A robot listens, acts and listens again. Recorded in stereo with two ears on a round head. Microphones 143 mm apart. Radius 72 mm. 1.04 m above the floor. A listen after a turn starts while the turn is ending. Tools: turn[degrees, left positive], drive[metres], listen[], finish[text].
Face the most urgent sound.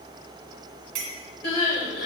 Thought: The crying: about 55° left or 125° left.
Action: turn[55]
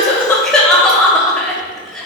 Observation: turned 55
Action: finish[Found it: crying, straight ahead.]